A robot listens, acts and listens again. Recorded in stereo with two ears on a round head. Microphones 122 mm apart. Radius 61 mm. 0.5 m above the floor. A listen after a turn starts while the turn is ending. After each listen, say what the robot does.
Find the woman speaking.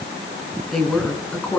Turn 30° left.
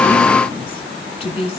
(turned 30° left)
Turn 135° left.
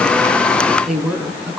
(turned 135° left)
Facing the woman speaking.